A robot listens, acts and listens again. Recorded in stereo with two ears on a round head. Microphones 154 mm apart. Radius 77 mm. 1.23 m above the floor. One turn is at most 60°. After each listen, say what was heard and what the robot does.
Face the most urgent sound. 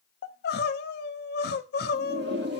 The crying: about 60° left or 120° left. Turn 60° left.
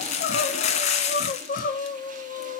So it is at 55° left. Turn 55° left.
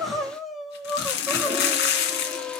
Facing the crying.